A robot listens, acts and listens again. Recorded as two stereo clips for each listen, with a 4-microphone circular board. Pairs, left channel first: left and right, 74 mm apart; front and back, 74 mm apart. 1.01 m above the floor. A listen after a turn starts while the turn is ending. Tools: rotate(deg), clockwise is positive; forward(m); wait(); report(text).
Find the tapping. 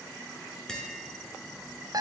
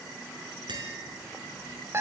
rotate(-170)
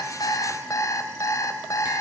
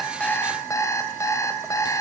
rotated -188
rotate(15)
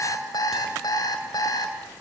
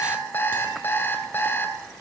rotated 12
wait()
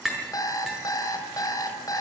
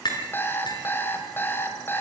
report("Found it: tapping, straight ahead, over 4 m away.")